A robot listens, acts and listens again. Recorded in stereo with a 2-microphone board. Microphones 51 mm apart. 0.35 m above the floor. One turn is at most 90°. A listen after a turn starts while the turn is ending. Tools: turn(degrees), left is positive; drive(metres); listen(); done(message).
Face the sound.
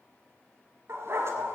turn(degrees=-60)
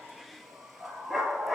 done("Found it: a dog barking, straight ahead, 2 to 4 m away.")